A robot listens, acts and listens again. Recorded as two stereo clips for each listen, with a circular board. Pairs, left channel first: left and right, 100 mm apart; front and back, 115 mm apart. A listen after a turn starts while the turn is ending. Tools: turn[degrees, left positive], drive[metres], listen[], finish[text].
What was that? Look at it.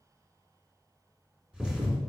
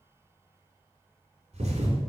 Thought: The thud: 170° right.
Action: turn[-170]
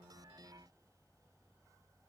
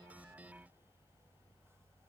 Action: finish[Facing where the thud came from. I can't hear it now.]